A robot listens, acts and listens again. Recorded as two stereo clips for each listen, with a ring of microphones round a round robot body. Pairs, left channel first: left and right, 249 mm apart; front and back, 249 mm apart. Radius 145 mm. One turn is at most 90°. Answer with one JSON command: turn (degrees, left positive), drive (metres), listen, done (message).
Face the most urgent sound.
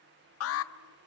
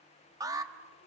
{"turn": 90}
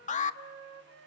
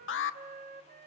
{"turn": 30}
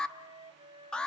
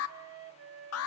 {"done": "Facing the alarm."}